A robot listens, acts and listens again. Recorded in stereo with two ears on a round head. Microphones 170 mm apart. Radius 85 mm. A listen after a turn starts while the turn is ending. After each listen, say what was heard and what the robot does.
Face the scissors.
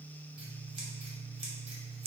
The scissors: about 30° right or 150° right. Turn 30° right.
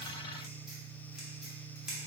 Facing the scissors.